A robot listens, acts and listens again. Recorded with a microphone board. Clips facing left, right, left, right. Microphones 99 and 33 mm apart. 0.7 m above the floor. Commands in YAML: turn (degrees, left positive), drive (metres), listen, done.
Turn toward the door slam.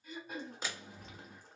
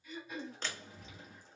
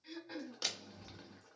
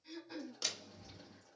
turn: 30
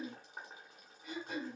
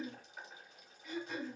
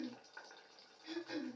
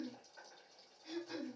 listen: true
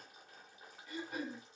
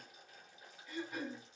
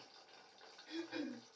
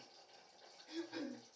done: "I heard a door slam, but can't make it out now. It was about 20° right or 140° left."